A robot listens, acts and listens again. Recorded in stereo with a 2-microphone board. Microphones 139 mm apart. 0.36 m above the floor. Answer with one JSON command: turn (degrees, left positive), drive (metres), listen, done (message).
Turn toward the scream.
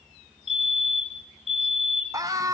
{"turn": -25}
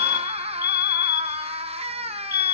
{"turn": -130}
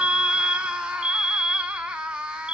{"done": "Facing the scream, 2 to 4 m away."}